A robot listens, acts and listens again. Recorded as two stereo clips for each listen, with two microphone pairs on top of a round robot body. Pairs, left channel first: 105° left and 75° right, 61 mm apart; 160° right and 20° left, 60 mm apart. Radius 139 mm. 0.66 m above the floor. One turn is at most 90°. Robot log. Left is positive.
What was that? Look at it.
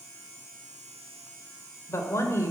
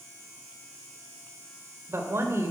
note: The woman speaking: 60° left.
cmd yaw +60
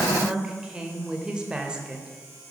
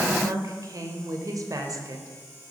end: Facing the woman speaking, 2 to 4 m away.